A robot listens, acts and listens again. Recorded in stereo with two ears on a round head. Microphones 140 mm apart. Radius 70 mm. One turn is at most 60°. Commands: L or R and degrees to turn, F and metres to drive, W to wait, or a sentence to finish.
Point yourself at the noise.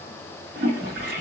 R60
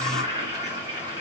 R30
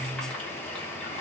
Facing the toilet flushing.